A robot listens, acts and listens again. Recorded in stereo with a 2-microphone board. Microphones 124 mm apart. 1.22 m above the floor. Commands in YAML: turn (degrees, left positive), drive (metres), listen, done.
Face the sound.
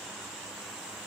listen: true
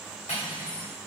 turn: 90
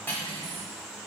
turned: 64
turn: 15
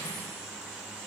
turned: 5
turn: 10
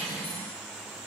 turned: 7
done: "Found it: cutlery clinking, straight ahead, 1 to 2 m away."